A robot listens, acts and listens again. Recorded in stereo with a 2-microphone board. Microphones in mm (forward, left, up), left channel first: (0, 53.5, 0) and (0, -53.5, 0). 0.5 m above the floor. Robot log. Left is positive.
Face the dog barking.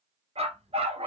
note: The dog barking: about 70° right or 110° right.
cmd yaw -70
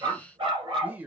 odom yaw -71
note: So it is at 50° right.
cmd yaw -50
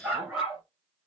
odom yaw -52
note: The dog barking is now 10° right.
cmd yaw -10
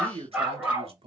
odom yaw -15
note: The dog barking is now 10° right.
cmd yaw -10
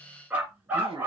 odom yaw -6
note: The dog barking is now 20° right.
cmd yaw -20
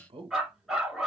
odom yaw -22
end: Found it: a dog barking, straight ahead.